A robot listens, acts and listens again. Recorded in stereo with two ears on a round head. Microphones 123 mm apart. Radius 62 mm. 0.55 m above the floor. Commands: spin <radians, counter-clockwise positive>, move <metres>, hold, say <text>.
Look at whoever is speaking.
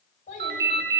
spin 1.13
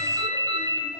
hold
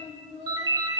spin 0.70
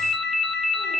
hold
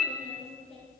say Found it: a child speaking, straight ahead, over 4 m away.